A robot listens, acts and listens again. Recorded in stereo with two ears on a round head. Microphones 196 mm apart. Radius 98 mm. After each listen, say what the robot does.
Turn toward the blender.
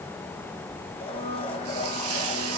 Turn 25° left.
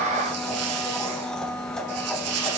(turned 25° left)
Facing the blender.